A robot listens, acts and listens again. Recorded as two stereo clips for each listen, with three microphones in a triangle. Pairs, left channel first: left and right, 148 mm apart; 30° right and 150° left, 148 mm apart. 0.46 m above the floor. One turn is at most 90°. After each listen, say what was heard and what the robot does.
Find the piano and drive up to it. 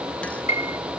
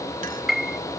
The piano: 60° left. Turn 60° left.
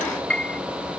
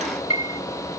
The piano is now 10° left. Turn 10° left.
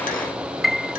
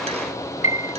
Drive 1.0 m forward.
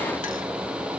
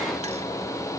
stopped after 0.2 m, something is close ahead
Keep listening.
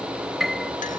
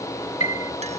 Something is in my way. I am facing the piano but have not reached it.